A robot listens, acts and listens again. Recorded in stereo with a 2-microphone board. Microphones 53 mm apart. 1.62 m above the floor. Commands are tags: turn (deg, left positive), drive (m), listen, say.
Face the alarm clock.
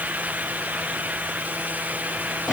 <listen/>
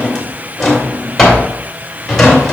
<listen/>
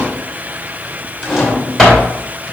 <say>I can't make out an alarm clock to turn to.</say>